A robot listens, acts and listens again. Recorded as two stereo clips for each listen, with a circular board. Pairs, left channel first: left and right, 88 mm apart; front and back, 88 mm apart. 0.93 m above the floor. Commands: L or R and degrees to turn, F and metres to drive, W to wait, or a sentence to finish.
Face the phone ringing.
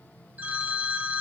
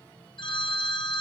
R20
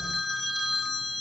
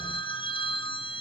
Facing the phone ringing, 1 to 2 m away.